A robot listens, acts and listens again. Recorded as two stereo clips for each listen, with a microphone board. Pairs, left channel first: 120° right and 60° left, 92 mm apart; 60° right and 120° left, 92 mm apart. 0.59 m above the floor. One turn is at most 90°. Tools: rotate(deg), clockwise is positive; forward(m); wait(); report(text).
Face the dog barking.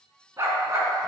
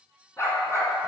report("Found it: a dog barking, straight ahead, 2 to 4 m away.")